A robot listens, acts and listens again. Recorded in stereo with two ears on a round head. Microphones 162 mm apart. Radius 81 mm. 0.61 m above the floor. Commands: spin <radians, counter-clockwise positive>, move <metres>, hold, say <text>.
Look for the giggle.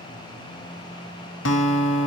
hold
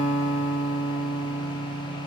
hold
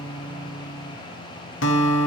say I can't make out a giggle, only a guitar.